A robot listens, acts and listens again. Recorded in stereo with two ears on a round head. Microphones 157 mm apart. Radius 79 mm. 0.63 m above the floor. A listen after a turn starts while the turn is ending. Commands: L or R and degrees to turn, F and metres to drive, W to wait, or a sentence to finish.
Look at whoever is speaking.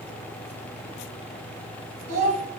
R50
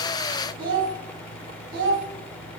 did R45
R80
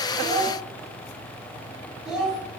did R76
Facing the child speaking.